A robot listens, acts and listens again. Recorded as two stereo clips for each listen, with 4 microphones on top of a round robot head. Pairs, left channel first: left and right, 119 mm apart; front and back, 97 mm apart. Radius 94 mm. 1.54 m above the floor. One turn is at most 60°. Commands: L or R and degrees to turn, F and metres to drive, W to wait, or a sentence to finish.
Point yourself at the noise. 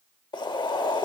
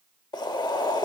L40
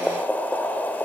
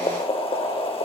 L15
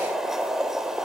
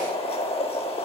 Found it: boiling, straight ahead, under 1 m away.